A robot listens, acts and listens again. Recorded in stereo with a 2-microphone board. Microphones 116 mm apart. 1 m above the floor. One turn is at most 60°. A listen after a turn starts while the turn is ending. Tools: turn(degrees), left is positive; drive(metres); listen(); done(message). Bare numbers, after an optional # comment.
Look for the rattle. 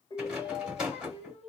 turn(-30)
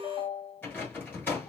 # So it is at 20° left.
turn(20)
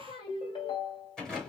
done("Facing the rattle.")